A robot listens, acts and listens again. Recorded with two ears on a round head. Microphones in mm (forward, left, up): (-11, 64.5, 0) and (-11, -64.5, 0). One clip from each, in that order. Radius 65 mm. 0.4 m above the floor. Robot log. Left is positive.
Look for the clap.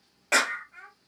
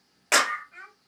note: The clap: about 60° right or 120° right.
cmd yaw -60
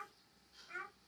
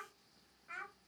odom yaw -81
cmd idle
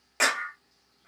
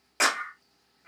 end: Found it: a clap, straight ahead.